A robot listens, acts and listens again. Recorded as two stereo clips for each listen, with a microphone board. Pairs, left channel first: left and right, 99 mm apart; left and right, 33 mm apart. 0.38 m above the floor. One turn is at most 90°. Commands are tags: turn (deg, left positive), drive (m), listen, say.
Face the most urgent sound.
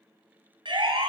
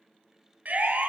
<turn deg="-55"/>
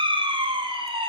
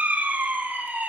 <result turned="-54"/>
<turn deg="-70"/>
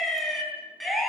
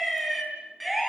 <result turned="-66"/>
<say>Found it: a siren, straight ahead.</say>